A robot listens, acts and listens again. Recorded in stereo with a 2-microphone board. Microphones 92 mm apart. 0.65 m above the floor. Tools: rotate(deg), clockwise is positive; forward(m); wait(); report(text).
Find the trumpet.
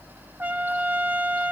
rotate(15)
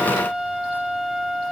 report("Found it: a trumpet, straight ahead.")